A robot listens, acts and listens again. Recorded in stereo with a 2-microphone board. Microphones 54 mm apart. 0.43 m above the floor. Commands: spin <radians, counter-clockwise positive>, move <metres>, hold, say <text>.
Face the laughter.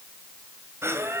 spin -0.87
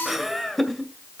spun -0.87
spin 0.17
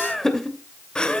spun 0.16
spin 0.35
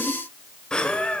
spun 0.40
spin 0.35
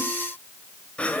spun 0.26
spin 0.44
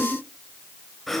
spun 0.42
say Facing the laughter, 2 to 4 m away.